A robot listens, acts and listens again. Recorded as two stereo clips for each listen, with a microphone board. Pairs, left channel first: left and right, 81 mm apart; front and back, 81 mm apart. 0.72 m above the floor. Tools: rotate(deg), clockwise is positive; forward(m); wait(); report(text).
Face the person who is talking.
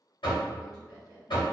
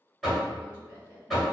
rotate(-55)
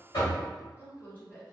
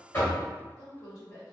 rotate(-30)
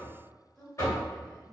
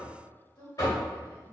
report("Facing the woman speaking.")